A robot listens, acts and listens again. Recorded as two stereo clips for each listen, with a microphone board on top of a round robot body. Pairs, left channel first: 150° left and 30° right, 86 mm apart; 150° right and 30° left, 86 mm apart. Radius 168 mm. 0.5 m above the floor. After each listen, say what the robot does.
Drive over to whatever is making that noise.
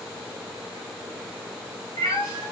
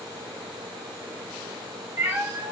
Turn 100° left.
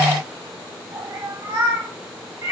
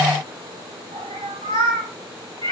Turn 25° left.
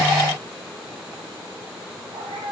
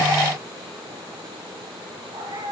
Drive 1.0 m forward.
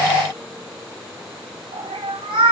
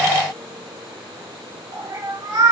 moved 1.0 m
Turn 15° right.
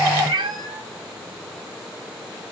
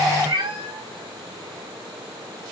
Drive 1.0 m forward.
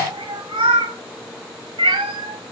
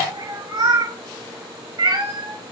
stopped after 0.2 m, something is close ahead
Arrived at the cat meowing, straight ahead.